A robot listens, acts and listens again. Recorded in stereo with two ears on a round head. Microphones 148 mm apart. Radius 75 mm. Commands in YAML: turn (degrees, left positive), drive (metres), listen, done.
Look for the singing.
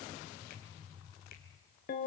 listen: true
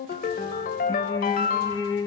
turn: 20
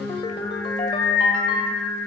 turn: 30
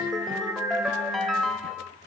turn: -15
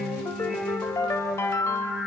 done: "Found it: singing, straight ahead, over 4 m away."